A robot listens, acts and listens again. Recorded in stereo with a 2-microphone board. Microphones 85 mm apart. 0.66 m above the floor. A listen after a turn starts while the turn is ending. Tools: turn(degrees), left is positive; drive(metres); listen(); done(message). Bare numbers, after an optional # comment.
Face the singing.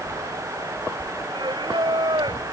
# The singing: about 65° right or 115° right.
turn(-65)
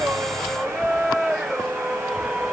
done("Found it: singing, straight ahead.")